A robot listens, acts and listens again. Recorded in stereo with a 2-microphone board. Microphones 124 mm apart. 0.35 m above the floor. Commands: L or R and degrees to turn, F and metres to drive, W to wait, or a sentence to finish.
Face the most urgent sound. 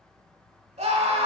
R65
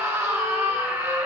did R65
R25
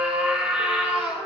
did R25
R15
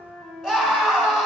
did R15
Facing the scream.